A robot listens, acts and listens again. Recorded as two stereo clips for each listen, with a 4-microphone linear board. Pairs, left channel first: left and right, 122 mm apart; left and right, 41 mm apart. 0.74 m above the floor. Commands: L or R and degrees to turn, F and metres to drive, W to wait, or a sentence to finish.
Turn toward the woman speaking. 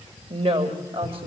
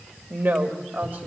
R50
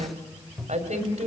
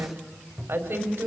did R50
R75
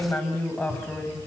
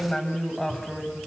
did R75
L20
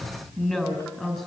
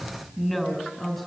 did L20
Found it: a woman speaking, straight ahead.